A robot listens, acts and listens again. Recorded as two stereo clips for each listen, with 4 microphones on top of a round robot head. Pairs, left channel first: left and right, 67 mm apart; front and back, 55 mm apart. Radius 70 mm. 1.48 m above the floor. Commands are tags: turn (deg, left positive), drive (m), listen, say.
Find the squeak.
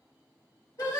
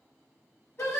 <listen/>
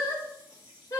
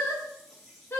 <listen/>
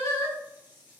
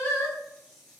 <say>I can't make out a squeak to turn to.</say>